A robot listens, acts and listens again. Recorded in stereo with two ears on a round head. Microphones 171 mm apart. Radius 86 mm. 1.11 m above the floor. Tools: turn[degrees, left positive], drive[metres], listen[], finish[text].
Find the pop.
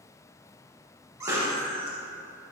Thought: The pop: about 20° right or 160° right.
Action: turn[-20]
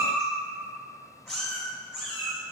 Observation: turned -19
Action: listen[]
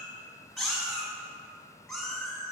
Action: finish[I heard a pop, but can't make it out now. It was about straight ahead or 145° right.]